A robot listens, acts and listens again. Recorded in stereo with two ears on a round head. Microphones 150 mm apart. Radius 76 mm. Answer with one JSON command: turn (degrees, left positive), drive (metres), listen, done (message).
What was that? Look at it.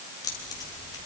{"turn": 20}
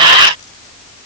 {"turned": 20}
{"listen": true}
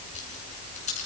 {"turn": 140}
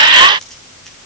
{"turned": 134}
{"done": "Facing the keys jangling."}